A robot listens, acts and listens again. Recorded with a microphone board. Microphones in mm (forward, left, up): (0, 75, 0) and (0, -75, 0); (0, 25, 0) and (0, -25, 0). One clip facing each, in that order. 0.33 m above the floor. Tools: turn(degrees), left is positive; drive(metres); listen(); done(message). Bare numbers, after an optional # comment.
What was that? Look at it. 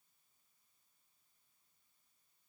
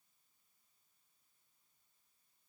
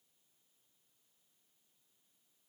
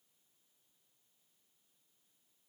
listen()
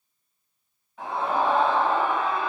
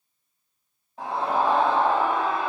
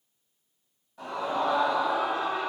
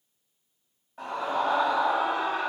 # The scream: about 35° right or 145° right.
turn(-35)
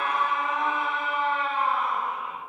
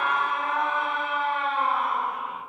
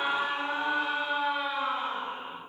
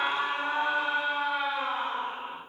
# So it is at 105° right.
turn(-105)
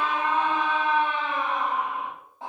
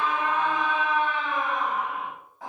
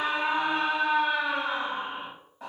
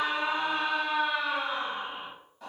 # The scream is now 30° left.
turn(30)
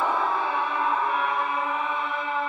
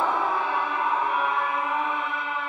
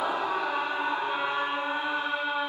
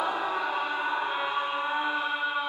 # The scream is now 20° right.
turn(-20)
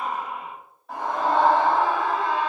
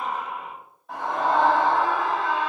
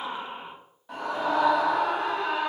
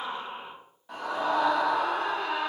done("Found it: a scream, straight ahead.")